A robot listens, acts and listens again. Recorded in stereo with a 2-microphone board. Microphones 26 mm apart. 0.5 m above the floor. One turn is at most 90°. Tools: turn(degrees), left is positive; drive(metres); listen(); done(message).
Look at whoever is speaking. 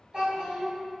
turn(degrees=-35)
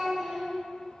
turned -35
turn(degrees=-10)
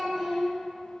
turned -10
done("Found it: a child speaking, straight ahead, 1 to 2 m away.")